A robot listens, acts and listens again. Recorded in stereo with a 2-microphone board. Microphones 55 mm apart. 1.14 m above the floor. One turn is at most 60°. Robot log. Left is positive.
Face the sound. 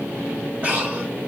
note: The breathing: about 25° right or 155° right.
cmd yaw -25
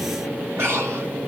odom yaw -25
note: So it is at 125° right.
cmd yaw -60
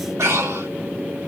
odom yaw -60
note: The breathing is now 65° right.
cmd yaw -60
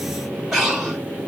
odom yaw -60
note: The breathing is now 10° right.
cmd yaw -10
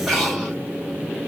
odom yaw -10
end: Facing the breathing.